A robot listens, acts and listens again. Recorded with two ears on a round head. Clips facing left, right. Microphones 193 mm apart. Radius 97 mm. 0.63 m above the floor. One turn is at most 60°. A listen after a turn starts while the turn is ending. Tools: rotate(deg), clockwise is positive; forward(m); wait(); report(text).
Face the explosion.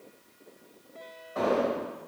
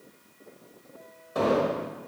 rotate(55)
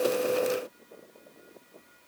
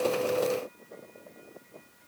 wait()
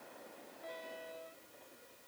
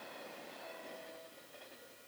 report("I heard an explosion, but can't make it out now. It was about straight ahead or 70° right.")